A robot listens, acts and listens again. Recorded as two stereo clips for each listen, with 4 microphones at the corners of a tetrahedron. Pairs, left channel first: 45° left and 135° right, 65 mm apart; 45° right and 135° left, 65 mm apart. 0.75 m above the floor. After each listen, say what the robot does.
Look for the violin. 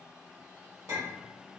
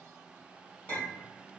Keep listening.
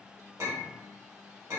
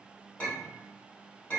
Keep listening.
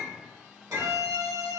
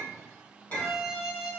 Turn 140° right.
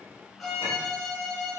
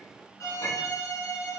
Turn 45° right.
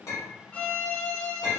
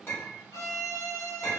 Turn 20° right.
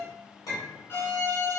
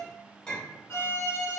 Found it: a violin, straight ahead, under 1 m away.